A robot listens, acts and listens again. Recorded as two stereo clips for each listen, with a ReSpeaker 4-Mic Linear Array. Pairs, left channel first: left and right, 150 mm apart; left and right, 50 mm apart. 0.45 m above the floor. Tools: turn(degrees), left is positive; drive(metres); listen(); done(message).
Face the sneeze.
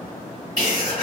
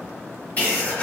turn(degrees=20)
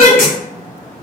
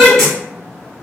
done("Found it: a sneeze, straight ahead.")